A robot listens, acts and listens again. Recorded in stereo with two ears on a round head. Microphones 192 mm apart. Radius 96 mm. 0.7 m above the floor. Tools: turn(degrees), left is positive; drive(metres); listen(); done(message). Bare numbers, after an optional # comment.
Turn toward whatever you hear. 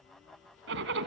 # The zipper: about 60° right or 120° right.
turn(-60)
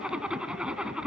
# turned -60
done("Facing the zipper, 1 to 2 m away.")